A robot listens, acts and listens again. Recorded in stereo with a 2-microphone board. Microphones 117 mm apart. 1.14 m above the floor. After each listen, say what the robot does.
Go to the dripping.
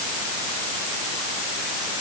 Keep listening.
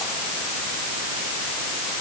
Keep listening.
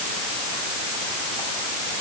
I can't make out dripping to turn to.